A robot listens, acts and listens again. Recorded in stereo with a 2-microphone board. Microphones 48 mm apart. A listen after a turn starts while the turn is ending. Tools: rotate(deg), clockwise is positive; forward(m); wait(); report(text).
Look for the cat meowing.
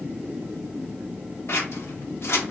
wait()
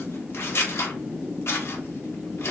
wait()
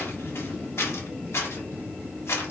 report("I can't make out a cat meowing to turn to.")